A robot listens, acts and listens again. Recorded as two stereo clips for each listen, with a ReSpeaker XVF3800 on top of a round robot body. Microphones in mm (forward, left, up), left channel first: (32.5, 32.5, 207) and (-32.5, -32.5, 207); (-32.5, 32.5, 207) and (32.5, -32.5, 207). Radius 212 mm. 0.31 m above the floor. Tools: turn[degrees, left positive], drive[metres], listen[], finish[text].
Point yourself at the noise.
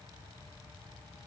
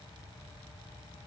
Action: listen[]
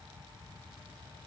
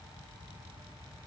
Action: listen[]
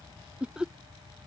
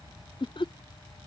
Thought: The laughter: 145° left.
Action: turn[145]
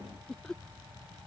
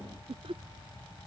Thought: The laughter is now 40° right.
Action: turn[-40]
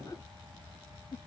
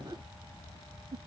Thought: The laughter is now 10° right.
Action: turn[-10]
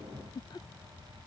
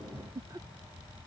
Action: finish[Found it: laughter, straight ahead.]